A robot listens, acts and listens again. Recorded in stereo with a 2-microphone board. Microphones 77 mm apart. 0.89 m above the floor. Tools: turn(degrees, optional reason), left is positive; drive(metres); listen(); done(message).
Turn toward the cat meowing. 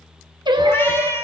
turn(degrees=35, reason="The cat meowing: about 35° left or 145° left.")
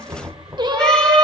listen()
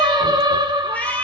turn(degrees=25, reason="The cat meowing: about 25° left or 155° left.")
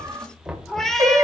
turn(degrees=10, reason="So it is at 10° left.")
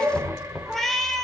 turn(degrees=10, reason="The cat meowing is now 10° left.")
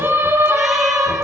listen()
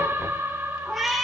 done("Facing the cat meowing.")